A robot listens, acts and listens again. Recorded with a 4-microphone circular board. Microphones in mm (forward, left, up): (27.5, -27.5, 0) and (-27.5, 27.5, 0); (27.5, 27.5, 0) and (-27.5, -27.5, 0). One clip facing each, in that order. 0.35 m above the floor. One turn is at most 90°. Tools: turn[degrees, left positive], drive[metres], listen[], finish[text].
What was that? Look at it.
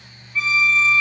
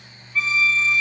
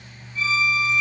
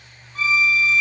Thought: The violin: 135° right.
Action: turn[-90]
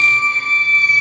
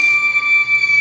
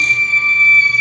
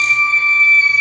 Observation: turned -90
Thought: The violin is now 70° right.
Action: turn[-70]
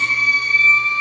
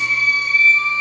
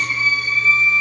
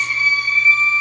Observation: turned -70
Thought: The violin is now 20° right.
Action: turn[-20]
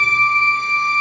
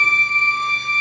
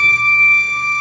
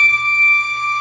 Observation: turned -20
Action: finish[Found it: a violin, straight ahead.]